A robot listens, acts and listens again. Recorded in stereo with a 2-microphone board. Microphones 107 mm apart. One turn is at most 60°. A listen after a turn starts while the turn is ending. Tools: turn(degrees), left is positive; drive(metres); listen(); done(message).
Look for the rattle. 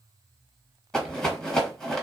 turn(degrees=30)
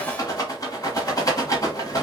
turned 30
turn(degrees=60)
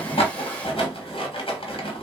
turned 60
turn(degrees=60)
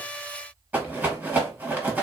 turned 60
turn(degrees=-15)
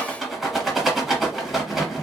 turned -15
done("Facing the rattle.")